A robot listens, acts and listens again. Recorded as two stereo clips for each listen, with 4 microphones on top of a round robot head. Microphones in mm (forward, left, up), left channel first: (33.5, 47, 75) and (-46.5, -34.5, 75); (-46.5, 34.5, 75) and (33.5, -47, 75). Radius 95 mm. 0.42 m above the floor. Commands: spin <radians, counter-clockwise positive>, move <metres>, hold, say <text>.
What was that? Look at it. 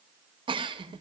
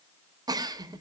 spin -1.66
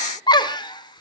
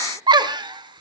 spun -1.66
say Found it: a giggle, straight ahead.